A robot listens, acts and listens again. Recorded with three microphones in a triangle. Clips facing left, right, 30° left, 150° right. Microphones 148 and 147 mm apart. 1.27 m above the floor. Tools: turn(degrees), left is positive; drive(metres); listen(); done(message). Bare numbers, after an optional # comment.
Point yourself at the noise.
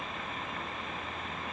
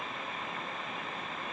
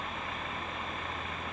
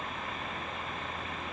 listen()
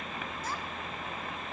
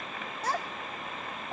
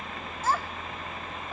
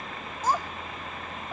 # The child speaking: 75° right.
turn(-75)
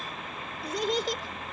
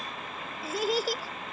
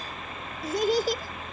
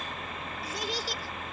done("Facing the child speaking.")